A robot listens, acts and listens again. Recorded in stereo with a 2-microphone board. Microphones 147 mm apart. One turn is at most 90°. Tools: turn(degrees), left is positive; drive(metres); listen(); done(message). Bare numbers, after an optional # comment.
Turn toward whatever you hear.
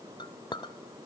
# The clink: about 30° left or 150° left.
turn(30)
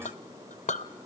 # So it is at 115° left.
turn(90)
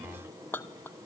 # The clink is now 15° left.
turn(15)
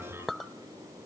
done("Found it: a clink, straight ahead.")